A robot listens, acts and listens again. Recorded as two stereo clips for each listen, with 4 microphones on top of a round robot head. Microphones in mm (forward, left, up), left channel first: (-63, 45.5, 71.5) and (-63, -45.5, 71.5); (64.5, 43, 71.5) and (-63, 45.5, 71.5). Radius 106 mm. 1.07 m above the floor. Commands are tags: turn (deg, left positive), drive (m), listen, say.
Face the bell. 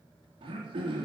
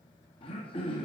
<listen/>
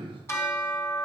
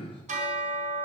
<turn deg="150"/>
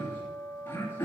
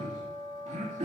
<say>Facing the bell, 2 to 4 m away.</say>